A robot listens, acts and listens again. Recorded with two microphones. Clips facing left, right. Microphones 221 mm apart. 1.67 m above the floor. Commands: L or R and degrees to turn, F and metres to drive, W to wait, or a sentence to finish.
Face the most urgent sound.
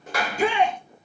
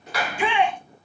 L40
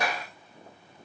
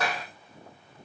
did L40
W
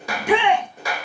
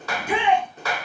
L105
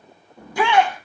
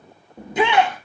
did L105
R20
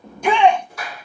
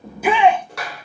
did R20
Found it: a shout, straight ahead.